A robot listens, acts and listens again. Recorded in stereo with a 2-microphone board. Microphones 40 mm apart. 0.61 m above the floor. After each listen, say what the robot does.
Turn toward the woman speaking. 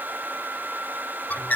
Keep listening.
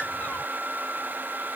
Keep listening.
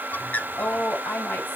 Turn 55° left.
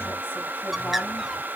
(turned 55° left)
Keep listening.
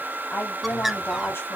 Turn 70° left.
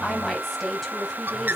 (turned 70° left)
Facing the woman speaking.